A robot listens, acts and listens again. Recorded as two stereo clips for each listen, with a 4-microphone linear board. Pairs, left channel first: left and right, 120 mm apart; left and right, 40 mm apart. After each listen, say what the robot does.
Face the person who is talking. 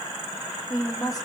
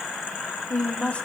Turn 30° left.
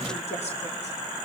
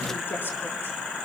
Keep listening.
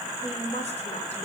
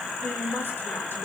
Turn 110° left.
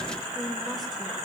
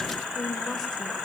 Facing the woman speaking.